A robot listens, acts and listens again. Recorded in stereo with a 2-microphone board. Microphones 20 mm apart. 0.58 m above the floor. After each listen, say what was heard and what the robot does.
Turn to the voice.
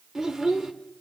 The child speaking: about 30° right or 150° right. Turn 30° right.
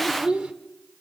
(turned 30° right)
So it is at 115° right. Turn 115° right.
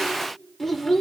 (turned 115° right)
The child speaking is now 15° left. Turn 15° left.
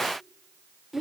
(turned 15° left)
Facing the child speaking.